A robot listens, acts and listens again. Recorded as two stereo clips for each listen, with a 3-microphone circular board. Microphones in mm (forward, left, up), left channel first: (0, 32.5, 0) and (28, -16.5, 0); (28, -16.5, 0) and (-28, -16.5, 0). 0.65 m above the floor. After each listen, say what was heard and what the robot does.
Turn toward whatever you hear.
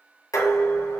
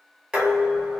The dishes clattering: 105° left. Turn 105° left.
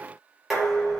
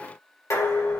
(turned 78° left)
The dishes clattering is now 30° left. Turn 30° left.
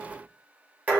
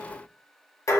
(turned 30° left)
Facing the dishes clattering, 2 to 4 m away.